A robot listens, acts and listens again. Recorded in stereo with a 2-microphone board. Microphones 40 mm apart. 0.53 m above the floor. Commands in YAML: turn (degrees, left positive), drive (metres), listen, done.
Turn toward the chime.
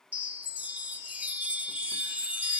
turn: -40
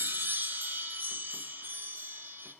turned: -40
turn: -100
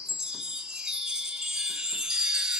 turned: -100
turn: -15
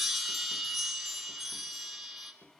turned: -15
done: "Found it: a chime, straight ahead."